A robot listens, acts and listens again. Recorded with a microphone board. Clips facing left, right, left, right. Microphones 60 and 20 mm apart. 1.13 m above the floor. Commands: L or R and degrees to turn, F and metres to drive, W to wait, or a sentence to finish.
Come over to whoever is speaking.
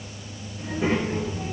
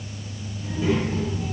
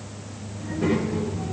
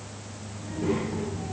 L45
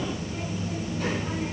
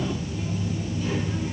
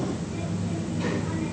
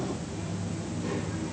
L90
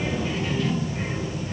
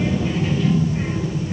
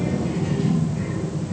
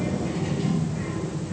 F1.0
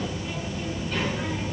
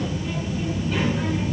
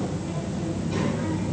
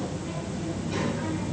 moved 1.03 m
F1.0
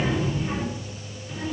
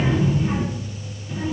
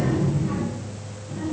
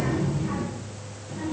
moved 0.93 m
R10
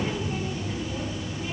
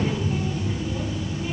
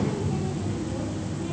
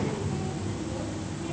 F1.0
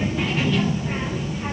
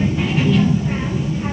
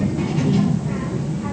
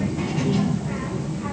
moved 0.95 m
F1.0
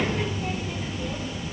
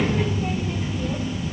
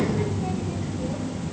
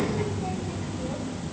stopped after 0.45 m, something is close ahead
Arrived at the child speaking, straight ahead.